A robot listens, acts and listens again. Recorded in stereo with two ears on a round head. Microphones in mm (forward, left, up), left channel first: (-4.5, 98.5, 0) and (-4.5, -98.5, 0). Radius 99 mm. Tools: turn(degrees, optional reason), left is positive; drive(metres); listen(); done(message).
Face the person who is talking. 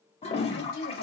turn(degrees=40, reason="The woman speaking: about 40° left or 140° left.")
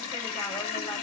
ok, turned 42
listen()
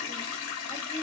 listen()
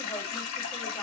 done("I heard a woman speaking, but can't make it out now. It was about straight ahead or 95° left.")